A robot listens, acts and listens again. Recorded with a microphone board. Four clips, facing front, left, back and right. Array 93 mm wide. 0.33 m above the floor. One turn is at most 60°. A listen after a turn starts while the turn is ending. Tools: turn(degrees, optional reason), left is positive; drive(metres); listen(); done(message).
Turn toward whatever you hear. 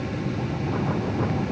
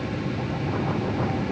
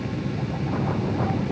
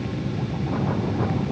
listen()
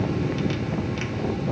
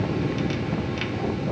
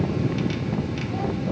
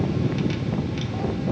listen()
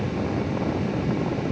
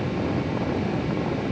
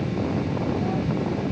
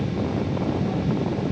done("I can't make out anything.")